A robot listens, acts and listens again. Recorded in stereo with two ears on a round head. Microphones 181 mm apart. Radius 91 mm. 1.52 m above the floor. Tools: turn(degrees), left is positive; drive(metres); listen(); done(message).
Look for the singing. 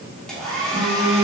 turn(degrees=-30)
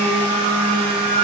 turn(degrees=-115)
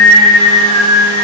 turn(degrees=-40)
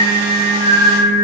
turn(degrees=-15)
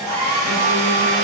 listen()
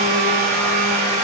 listen()
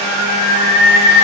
done("Facing the singing.")